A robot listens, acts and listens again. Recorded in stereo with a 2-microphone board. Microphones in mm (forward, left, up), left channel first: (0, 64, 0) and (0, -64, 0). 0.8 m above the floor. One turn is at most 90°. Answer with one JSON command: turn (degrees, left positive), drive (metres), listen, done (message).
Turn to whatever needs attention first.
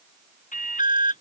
{"turn": 90}
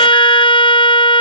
{"listen": true}
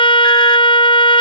{"listen": true}
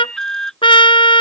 {"done": "Found it: an alarm, straight ahead."}